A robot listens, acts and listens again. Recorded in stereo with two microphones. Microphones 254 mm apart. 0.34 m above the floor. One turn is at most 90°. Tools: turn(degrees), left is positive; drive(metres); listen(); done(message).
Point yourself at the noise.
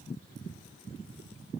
listen()
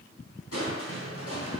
turn(degrees=65)
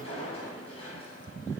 turn(degrees=25)
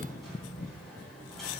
done("Facing the crushing.")